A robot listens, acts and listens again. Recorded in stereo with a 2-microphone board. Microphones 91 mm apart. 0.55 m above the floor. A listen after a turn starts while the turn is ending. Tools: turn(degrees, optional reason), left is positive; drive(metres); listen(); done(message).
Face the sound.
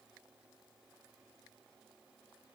listen()
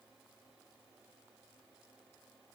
listen()
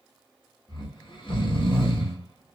turn(degrees=60, reason="The snoring: about 60° left or 120° left.")
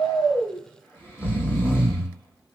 turn(degrees=25, reason="So it is at 25° left.")
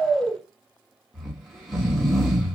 done("Found it: snoring, straight ahead, under 1 m away.")